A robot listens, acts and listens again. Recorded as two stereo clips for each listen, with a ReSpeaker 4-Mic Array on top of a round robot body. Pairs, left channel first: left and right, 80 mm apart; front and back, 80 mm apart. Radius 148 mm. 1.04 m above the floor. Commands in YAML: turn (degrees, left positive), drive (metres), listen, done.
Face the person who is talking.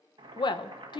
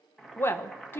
turn: 65
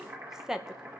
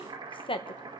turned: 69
done: "Found it: a woman speaking, straight ahead, under 1 m away."